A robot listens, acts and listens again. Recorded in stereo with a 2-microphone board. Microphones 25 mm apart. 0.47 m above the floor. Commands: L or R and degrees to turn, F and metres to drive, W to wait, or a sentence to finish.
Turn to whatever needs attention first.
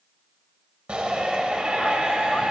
R55
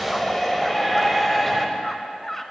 Facing the shout.